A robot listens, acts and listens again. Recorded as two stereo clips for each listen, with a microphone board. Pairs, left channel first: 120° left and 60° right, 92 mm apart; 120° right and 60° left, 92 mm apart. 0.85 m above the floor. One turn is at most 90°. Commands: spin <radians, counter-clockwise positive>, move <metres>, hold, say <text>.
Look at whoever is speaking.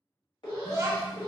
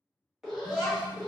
spin -1.57
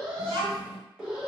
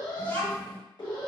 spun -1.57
spin -0.87
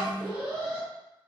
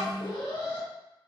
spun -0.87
say Facing the child speaking.